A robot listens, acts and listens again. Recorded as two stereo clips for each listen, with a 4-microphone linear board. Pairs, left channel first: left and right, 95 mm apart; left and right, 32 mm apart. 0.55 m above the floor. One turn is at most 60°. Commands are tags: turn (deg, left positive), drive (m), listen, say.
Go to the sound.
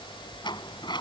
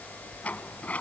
<turn deg="55"/>
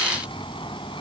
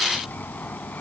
<turn deg="60"/>
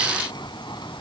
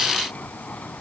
<turn deg="50"/>
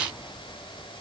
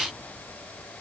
<listen/>
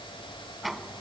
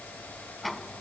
<drive m="1.0"/>
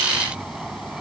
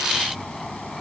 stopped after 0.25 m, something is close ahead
<say>Blocked. The sliding door is further on, straight ahead.</say>